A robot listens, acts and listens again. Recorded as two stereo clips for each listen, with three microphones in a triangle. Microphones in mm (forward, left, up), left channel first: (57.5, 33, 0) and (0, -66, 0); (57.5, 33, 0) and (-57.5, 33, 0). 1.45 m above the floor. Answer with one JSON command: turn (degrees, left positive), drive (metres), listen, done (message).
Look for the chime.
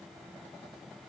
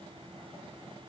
{"listen": true}
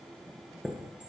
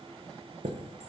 {"turn": 155}
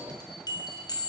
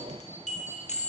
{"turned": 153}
{"done": "Found it: a chime, straight ahead."}